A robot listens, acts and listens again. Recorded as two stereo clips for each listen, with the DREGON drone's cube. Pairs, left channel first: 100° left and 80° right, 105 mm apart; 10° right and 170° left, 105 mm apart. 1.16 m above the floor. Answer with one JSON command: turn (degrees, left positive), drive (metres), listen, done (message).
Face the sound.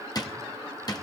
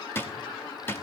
{"turn": 50}
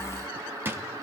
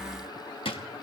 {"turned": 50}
{"turn": -10}
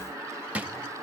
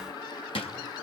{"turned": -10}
{"done": "Found it: a drawer, straight ahead, under 1 m away."}